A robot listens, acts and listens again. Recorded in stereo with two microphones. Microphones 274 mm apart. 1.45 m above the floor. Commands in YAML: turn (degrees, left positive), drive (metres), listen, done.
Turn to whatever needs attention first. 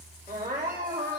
turn: -40
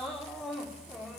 done: "Facing the crying, 2 to 4 m away."